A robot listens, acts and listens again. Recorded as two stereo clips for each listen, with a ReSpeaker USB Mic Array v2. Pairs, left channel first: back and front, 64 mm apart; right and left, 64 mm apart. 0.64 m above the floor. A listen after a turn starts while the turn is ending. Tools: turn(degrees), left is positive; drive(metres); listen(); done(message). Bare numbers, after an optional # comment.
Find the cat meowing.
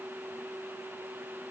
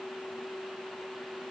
listen()
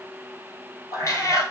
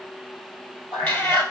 # The cat meowing: 140° right.
turn(-140)
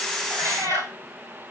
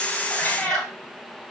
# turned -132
# The cat meowing is now 10° right.
turn(-10)
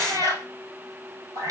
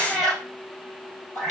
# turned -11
done("Found it: a cat meowing, straight ahead.")